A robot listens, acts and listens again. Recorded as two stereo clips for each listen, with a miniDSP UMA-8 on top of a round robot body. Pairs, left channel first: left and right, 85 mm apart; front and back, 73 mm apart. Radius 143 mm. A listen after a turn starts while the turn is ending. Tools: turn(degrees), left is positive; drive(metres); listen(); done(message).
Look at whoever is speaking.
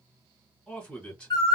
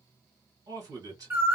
turn(degrees=165)
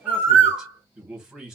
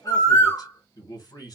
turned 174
turn(degrees=-10)
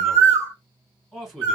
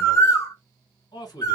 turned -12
done("Found it: a man speaking, straight ahead.")